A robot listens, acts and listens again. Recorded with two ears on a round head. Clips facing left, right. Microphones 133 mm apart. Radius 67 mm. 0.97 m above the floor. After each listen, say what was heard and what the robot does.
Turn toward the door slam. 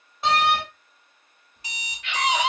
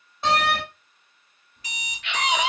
Turn 30° left.
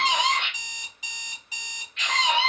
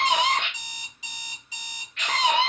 Keep listening.
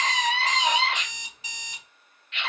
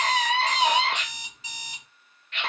I heard a door slam, but can't make it out now. It was about 30° right or 150° left.